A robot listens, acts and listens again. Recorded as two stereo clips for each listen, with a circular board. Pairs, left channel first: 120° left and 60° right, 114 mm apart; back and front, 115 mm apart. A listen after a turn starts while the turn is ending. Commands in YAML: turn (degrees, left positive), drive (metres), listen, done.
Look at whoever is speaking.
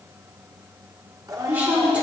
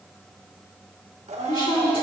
turn: -140
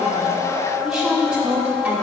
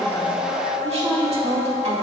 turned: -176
turn: 15
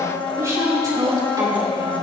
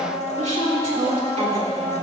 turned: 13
done: "Facing the woman speaking."